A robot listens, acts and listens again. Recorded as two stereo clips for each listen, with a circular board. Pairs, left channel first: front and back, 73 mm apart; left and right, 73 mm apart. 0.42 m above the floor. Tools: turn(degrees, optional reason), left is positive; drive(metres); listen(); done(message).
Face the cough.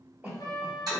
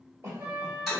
turn(degrees=-130, reason="The cough: 130° right.")
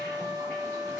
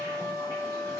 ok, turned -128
listen()
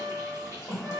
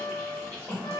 done("Facing the cough.")